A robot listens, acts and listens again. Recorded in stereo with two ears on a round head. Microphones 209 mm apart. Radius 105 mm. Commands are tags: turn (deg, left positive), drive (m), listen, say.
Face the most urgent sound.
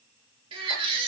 <turn deg="-25"/>
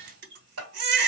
<turn deg="-130"/>
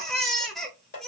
<say>Facing the baby crying.</say>